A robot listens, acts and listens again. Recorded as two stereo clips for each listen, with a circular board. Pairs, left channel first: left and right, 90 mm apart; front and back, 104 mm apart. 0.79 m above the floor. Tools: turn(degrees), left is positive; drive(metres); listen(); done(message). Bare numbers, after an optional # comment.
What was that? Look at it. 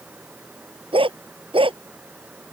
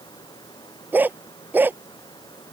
# The dog barking: 110° right.
turn(-110)
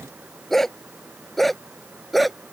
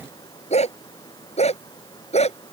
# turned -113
done("Found it: a dog barking, straight ahead.")